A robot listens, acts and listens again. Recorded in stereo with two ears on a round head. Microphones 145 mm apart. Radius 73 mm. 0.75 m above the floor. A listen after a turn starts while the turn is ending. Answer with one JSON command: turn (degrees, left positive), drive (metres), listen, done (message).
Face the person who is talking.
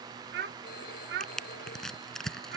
{"turn": -70}
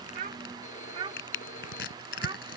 {"turn": -35}
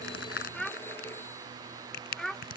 {"done": "Facing the child speaking."}